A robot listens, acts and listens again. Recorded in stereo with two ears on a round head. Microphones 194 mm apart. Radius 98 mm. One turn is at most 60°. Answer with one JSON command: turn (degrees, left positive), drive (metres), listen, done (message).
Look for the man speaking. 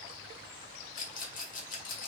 {"listen": true}
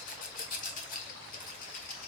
{"listen": true}
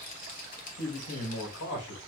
{"turn": 60}
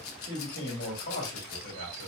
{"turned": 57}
{"turn": 50}
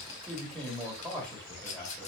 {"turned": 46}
{"done": "Found it: a man speaking, straight ahead."}